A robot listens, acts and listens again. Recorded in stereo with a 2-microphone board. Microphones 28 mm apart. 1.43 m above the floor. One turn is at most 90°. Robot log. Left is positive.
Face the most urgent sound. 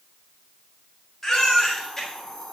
note: The baby crying: about 25° left or 155° left.
cmd yaw +25
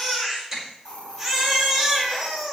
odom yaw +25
end: Found it: a baby crying, straight ahead, over 4 m away.